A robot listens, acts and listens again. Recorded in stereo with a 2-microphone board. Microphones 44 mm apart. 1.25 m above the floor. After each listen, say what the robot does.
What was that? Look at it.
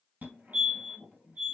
Turn 45° right.
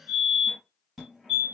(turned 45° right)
Found it: a fire alarm, straight ahead.